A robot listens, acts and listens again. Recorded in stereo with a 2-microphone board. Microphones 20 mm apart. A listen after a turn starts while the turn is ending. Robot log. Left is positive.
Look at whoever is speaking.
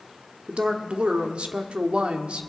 note: The woman speaking: about 65° right or 115° right.
cmd yaw -65
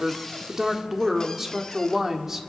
note: So it is at 20° right.
cmd yaw -20
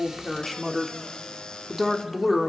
end: Facing the woman speaking.